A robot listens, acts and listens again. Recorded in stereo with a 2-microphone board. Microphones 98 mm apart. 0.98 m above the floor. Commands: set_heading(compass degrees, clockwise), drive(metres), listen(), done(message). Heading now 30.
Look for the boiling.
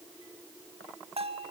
listen()
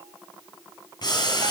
set_heading(345)
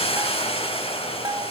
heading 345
set_heading(255)
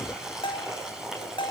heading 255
done("Facing the boiling.")